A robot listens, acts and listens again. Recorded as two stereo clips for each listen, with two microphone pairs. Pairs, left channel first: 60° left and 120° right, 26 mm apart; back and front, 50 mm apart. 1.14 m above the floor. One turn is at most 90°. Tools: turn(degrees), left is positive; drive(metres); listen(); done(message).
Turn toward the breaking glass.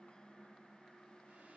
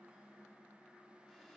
listen()
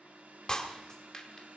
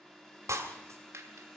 done("Found it: breaking glass, straight ahead.")